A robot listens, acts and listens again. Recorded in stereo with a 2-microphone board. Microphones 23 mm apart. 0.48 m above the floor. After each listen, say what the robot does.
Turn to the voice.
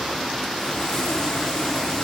Keep listening.
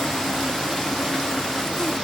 Keep listening.
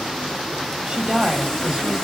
Turn 35° right.
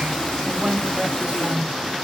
Turn 105° right.
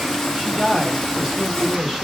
Turn 10° right.
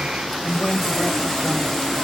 Found it: a woman speaking, straight ahead, 2 to 4 m away.